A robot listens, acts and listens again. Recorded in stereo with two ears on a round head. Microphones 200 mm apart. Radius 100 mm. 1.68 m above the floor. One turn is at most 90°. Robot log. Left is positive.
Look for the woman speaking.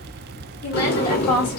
note: The woman speaking: about 70° left or 110° left.
cmd yaw +70
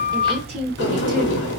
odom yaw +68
note: So it is at 30° right.
cmd yaw -30
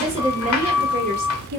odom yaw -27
note: The woman speaking is now 45° right.
cmd yaw -45
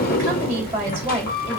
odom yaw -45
note: The woman speaking is now 10° right.
cmd yaw -10
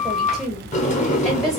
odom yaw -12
end: Found it: a woman speaking, straight ahead.